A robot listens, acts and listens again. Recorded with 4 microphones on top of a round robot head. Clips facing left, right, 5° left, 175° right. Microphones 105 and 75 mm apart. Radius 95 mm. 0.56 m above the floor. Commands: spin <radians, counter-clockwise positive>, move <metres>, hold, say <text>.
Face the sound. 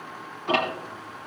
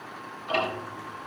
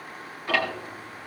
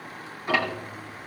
spin 2.01
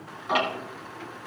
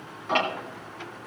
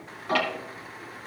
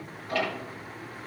spin 0.17
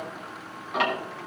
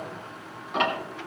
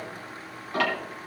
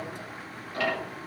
say Found it: ticking, straight ahead, 2 to 4 m away.